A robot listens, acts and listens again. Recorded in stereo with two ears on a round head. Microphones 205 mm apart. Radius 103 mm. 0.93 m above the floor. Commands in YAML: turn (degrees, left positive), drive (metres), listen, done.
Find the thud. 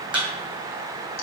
turn: -30
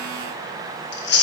listen: true
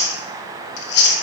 done: "I heard a thud, but can't make it out now. It was about 25° left or 145° right."